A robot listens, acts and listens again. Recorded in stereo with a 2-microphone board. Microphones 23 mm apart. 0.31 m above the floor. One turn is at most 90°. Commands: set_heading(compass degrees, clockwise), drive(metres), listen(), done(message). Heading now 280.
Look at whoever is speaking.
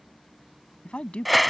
set_heading(220)
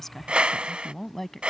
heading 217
set_heading(202)
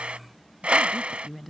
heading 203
done("Facing the woman speaking.")